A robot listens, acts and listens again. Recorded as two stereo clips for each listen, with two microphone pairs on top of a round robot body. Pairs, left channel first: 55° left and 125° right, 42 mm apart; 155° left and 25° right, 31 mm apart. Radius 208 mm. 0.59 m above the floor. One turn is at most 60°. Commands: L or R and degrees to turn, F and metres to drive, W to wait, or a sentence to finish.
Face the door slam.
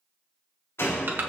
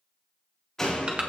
L60
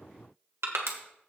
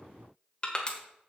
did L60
L15
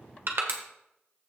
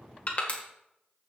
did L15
I heard a door slam from this way, but can't make it out now.